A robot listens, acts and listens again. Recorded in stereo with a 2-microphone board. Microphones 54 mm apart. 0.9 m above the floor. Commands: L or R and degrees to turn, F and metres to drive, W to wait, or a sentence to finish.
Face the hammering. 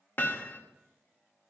L40
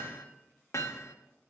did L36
L105
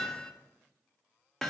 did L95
L10
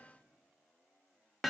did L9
Found it: hammering, straight ahead, 1 to 2 m away.